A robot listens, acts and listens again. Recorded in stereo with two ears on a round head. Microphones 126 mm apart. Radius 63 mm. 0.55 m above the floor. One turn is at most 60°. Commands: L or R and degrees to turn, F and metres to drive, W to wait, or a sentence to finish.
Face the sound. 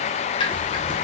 L35
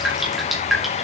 Facing the dripping.